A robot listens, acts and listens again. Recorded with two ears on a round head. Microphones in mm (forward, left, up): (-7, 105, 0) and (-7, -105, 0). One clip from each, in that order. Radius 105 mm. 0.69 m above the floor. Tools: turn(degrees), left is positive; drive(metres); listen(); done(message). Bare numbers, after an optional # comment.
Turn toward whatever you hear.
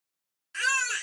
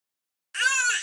# The baby crying: about 30° right or 150° right.
turn(-30)
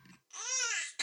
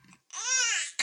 # So it is at 115° right.
turn(-115)
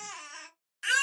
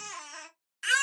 done("Facing the baby crying.")